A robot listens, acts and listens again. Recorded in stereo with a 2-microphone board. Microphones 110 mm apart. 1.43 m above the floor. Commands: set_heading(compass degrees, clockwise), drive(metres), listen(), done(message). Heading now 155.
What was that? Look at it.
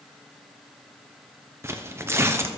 set_heading(180)
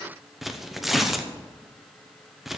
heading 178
done("Facing the tearing paper.")